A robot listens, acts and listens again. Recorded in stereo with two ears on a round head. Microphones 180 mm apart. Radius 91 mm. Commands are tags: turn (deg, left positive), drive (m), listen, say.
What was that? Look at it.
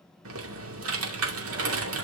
<turn deg="-90"/>
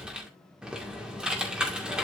<say>Facing the typing on a keyboard, 2 to 4 m away.</say>